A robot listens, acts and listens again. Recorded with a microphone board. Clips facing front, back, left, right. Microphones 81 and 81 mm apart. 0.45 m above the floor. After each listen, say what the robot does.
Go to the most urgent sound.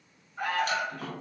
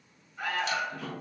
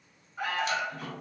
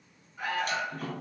Turn 40° left.
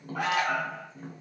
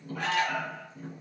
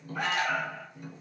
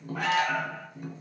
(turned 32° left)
Drive 1.0 m forward.
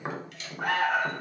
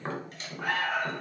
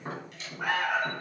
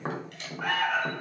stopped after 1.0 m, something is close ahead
Turn 10° left.
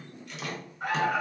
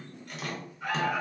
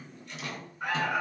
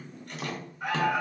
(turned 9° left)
I am next to the alarm.